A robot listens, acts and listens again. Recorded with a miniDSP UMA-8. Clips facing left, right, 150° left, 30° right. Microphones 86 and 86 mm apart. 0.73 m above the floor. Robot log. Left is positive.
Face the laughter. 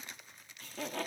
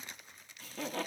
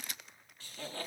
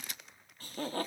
end: Found it: laughter, straight ahead.